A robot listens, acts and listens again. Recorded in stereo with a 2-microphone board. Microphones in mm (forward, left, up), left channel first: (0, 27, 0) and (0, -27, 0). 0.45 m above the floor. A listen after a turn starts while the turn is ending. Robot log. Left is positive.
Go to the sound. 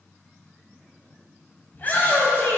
note: The shout: about 35° left or 145° left.
cmd yaw +35
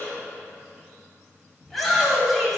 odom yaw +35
cmd fwd 1.0
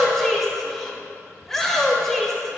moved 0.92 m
cmd fwd 1.0
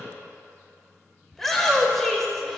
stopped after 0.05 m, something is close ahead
end: I am next to the shout.